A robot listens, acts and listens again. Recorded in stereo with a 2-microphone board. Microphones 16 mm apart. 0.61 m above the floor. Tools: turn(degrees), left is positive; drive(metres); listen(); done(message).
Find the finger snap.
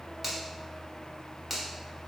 turn(degrees=-30)
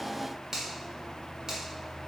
turn(degrees=-135)
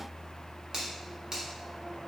turn(degrees=-35)
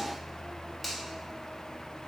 listen()
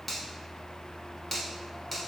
turn(degrees=10)
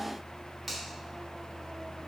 done("Found it: a finger snap, straight ahead, 1 to 2 m away.")